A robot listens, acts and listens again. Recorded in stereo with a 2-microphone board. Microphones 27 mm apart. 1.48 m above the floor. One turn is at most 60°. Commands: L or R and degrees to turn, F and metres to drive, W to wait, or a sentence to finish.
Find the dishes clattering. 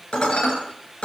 L35
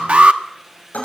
L60
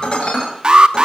L40
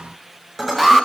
Found it: dishes clattering, straight ahead, over 4 m away.